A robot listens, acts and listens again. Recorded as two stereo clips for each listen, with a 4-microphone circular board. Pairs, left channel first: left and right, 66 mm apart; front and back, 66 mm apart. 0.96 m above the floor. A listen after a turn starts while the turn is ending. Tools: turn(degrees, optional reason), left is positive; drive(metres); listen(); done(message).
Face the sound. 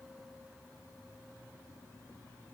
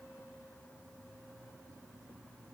listen()
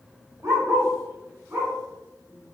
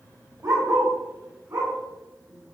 turn(degrees=-140, reason="The dog barking: 140° right.")
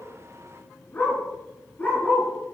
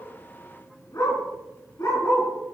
turn(degrees=25, reason="The dog barking is now 25° left.")
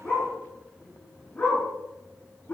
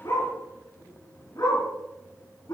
turn(degrees=20, reason="The dog barking is now 20° left.")
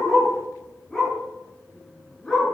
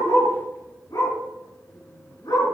done("Found it: a dog barking, straight ahead.")